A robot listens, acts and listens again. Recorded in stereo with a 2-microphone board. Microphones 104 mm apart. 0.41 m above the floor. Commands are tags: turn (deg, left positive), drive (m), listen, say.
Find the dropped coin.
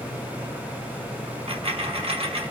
<turn deg="-75"/>
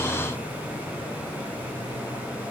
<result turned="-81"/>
<listen/>
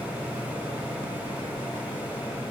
<say>I heard a dropped coin, but can't make it out now. It was about 5° left or 25° right.</say>